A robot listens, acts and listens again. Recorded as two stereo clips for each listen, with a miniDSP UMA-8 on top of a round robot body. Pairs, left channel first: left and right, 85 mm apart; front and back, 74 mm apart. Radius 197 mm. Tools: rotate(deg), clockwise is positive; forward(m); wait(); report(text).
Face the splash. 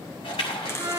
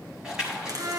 rotate(-100)
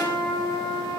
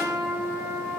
report("Facing where the splash came from. I can't hear it now.")